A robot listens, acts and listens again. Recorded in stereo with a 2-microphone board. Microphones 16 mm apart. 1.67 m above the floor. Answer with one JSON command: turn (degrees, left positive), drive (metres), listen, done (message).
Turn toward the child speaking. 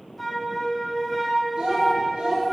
{"turn": -65}
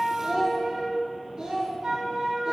{"turn": -50}
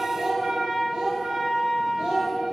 {"turn": -60}
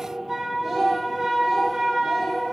{"turn": -15}
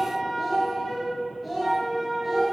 {"done": "Facing the child speaking."}